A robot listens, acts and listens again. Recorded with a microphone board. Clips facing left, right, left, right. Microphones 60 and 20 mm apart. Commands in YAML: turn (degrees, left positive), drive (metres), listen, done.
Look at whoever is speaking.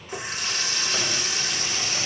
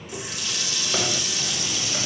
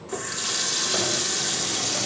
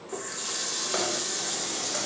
listen: true
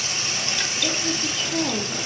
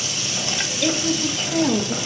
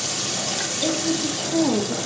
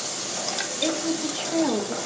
turn: -55
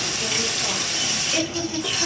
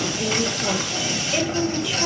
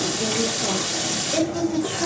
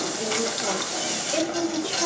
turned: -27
turn: -10
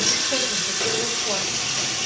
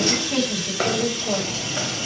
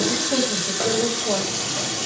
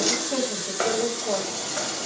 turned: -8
done: "Found it: a woman speaking, straight ahead."